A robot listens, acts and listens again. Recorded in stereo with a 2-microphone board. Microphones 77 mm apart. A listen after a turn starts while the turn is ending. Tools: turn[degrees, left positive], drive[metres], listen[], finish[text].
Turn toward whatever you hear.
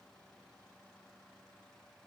Action: listen[]
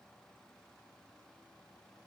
Action: listen[]
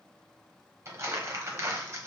Thought: The crumpling: about 35° right or 145° right.
Action: turn[-35]
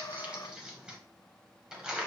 Thought: So it is at 10° right.
Action: turn[-10]
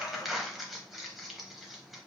Action: finish[Facing the crumpling, under 1 m away.]